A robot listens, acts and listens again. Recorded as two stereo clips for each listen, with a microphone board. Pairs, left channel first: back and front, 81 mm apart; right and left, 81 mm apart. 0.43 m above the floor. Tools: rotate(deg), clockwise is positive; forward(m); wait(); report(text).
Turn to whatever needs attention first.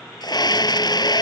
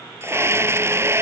rotate(-150)
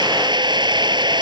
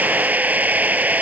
rotate(-20)
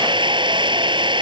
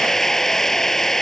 report("Facing the scream.")